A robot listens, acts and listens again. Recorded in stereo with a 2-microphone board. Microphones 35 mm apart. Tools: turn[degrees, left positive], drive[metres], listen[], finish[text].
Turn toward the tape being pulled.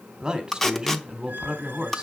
Action: turn[30]
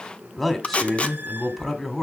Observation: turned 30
Thought: So it is at 140° left.
Action: turn[140]
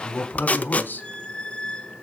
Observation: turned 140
Thought: The tape being pulled is now 45° left.
Action: turn[45]
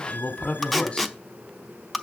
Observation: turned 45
Action: finish[Facing the tape being pulled.]